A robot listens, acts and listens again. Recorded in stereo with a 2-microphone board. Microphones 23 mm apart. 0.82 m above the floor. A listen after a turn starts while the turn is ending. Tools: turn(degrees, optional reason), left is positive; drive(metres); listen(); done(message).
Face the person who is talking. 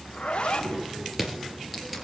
turn(degrees=-40, reason="The child speaking: about 40° right or 140° right.")
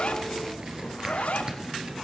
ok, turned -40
done("Found it: a child speaking, straight ahead, over 4 m away.")